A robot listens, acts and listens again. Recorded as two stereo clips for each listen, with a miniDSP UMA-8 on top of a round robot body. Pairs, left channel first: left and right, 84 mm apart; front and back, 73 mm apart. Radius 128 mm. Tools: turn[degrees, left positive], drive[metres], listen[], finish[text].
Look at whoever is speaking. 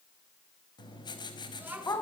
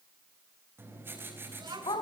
Thought: The child speaking: 160° right.
Action: turn[-160]
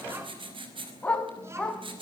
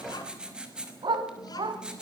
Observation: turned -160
Action: listen[]
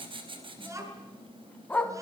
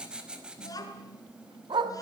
Thought: The child speaking is now 35° right.
Action: turn[-35]
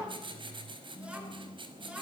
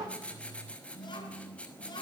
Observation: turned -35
Thought: The child speaking is now 15° right.
Action: turn[-15]
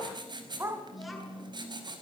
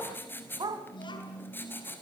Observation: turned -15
Action: finish[Found it: a child speaking, straight ahead.]